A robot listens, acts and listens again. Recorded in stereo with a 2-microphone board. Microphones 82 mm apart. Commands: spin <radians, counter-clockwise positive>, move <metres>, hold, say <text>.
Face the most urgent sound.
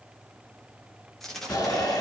spin 0.87
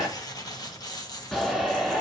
say Found it: a shout, straight ahead, 2 to 4 m away.